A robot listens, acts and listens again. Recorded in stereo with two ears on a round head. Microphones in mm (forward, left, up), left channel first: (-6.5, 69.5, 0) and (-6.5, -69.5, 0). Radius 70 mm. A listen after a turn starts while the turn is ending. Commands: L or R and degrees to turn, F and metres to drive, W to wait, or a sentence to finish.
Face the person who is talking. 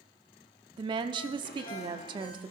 R30
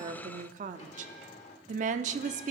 R115
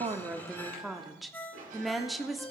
Found it: a woman speaking, straight ahead.